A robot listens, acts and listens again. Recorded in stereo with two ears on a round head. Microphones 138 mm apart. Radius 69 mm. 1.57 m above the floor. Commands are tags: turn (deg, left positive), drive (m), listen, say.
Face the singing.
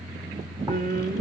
<turn deg="-60"/>
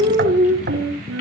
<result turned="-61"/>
<turn deg="-60"/>
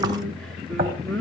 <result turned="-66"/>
<say>Facing the singing, 2 to 4 m away.</say>